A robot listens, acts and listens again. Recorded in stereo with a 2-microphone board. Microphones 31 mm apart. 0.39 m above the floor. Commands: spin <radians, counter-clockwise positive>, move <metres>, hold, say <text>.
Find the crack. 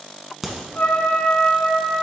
spin 0.52
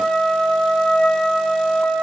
hold
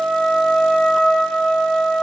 say I heard a crack, but can't make it out now. It was about 30° right or 150° left.